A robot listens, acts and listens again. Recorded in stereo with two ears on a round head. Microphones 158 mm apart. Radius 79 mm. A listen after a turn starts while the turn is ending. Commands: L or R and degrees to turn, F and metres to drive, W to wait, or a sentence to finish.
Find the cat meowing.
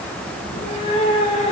L35
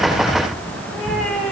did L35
Facing the cat meowing.